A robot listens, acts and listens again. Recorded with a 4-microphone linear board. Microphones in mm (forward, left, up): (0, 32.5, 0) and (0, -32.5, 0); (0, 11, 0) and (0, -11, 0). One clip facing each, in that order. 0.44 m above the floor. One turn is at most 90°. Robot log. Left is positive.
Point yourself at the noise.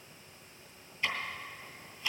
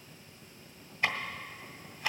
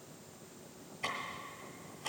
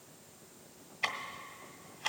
note: The ticking: about 55° right or 125° right.
cmd yaw -55
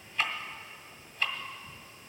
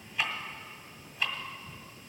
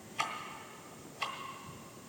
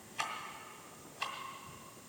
end: Facing the ticking, 1 to 2 m away.